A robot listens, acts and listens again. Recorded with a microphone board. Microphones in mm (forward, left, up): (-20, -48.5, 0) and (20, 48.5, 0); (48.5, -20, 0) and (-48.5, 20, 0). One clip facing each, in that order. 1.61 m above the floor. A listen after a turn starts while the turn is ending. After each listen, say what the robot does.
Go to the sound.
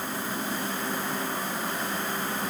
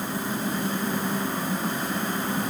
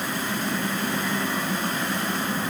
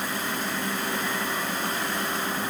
Keep listening.
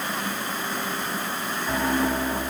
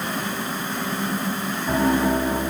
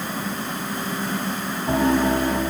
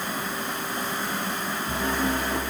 Turn 10° right.
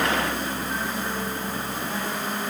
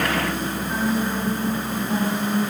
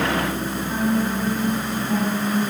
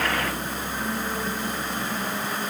Drive 1.0 m forward.
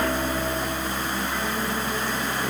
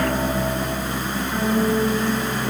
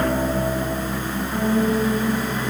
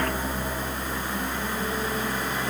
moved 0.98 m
Drive 1.0 m forward.
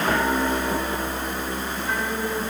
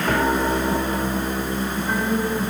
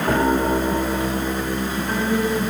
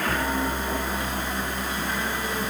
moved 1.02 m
Turn 15° right.
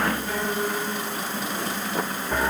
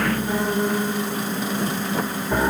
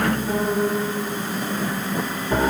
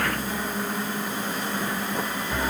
Drive 1.0 m forward.
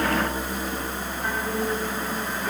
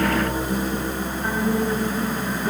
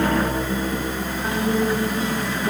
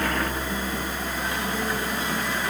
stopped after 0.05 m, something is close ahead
Arrived at the piano, straight ahead.